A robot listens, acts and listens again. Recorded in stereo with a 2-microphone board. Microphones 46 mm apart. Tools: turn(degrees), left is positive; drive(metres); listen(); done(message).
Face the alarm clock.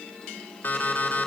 turn(degrees=35)
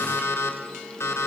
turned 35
turn(degrees=110)
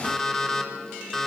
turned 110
turn(degrees=15)
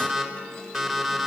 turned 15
done("Facing the alarm clock.")